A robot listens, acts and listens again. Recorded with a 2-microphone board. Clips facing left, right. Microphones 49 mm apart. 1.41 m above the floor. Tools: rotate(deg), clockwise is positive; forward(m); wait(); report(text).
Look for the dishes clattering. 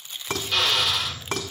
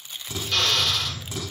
rotate(-55)
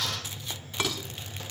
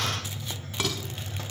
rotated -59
report("Found it: dishes clattering, straight ahead, over 4 m away.")